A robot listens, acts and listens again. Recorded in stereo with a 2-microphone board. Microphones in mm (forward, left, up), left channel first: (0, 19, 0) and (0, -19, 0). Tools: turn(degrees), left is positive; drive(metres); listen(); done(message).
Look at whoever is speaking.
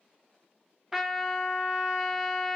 listen()
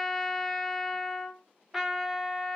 listen()
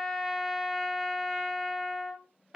done("I can't make out anyone speaking to turn to.")